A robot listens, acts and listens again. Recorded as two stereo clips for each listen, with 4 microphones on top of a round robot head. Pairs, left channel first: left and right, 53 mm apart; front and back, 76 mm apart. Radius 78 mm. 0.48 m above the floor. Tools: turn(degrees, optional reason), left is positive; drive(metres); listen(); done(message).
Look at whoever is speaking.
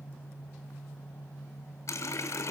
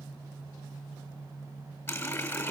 listen()
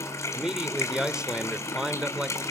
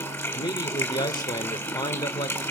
turn(degrees=-15, reason="The man speaking: 15° right.")
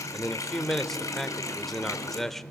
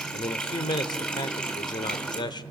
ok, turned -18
done("Found it: a man speaking, straight ahead, 1 to 2 m away.")